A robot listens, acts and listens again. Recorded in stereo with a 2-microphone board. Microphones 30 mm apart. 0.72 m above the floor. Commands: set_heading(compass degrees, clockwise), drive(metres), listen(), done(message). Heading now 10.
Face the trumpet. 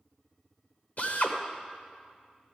listen()
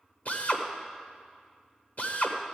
listen()
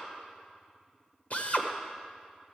done("I can't make out a trumpet, only a drill.")